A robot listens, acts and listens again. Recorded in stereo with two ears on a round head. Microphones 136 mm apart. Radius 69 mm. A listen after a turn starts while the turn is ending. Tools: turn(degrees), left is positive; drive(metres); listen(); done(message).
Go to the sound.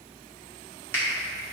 turn(degrees=15)
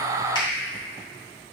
listen()
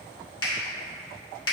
turn(degrees=150)
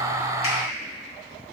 listen()
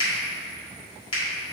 turn(degrees=35)
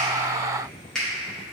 drive(metres=1.0)
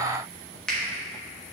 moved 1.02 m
drive(metres=1.0)
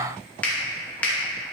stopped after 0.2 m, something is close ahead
turn(degrees=10)
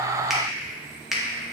done("I am next to the finger snap.")